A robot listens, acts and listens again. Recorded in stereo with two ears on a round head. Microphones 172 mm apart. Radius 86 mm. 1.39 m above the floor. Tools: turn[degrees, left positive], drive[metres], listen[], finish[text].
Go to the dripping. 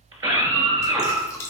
Thought: The dripping: about 15° left or 165° left.
Action: turn[15]
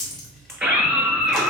Action: drive[1.0]
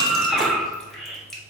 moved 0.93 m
Action: drive[1.0]
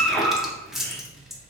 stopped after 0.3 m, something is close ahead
Action: finish[I am next to the dripping.]